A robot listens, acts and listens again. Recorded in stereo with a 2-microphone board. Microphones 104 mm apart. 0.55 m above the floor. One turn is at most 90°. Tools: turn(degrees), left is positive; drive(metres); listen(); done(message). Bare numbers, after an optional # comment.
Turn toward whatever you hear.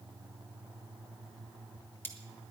# The cutlery clinking: about 20° left or 160° left.
turn(20)
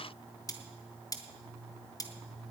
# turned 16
# So it is at 145° left.
turn(90)
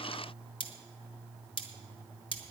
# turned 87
# The cutlery clinking is now 55° left.
turn(55)
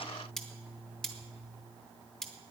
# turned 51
done("Found it: cutlery clinking, straight ahead, 1 to 2 m away.")